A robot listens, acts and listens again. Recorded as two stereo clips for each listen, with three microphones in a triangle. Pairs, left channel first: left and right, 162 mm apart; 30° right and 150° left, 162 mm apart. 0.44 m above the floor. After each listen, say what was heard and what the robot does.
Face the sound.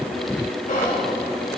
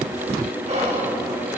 The whispering: 110° left. Turn 110° left.
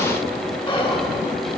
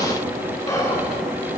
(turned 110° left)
The whispering is now 35° left. Turn 35° left.
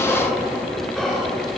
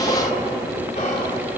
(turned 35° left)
Found it: whispering, straight ahead.